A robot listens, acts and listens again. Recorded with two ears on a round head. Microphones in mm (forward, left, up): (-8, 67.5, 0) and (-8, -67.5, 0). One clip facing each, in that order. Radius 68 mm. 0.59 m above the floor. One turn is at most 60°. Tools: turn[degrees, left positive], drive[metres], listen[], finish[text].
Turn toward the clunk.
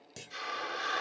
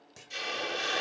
Thought: The clunk: about 35° left or 145° left.
Action: turn[35]
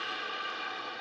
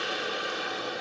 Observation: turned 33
Action: listen[]
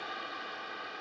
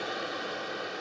Action: finish[I heard a clunk, but can't make it out now. It was about straight ahead or 115° left.]